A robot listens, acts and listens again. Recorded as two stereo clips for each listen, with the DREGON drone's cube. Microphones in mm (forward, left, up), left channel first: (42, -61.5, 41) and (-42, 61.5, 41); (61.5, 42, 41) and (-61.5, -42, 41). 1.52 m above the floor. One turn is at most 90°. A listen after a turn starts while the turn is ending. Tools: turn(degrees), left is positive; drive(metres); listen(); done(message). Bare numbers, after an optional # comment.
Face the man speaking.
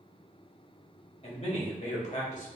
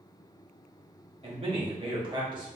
# The man speaking: 90° right.
turn(-90)
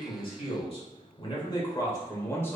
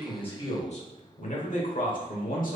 # The man speaking is now 20° left.
turn(20)
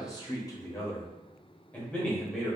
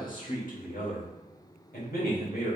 # The man speaking is now 30° left.
turn(30)
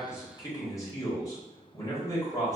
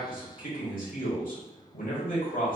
# The man speaking is now 10° left.
turn(10)
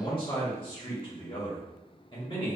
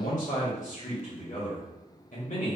done("Facing the man speaking.")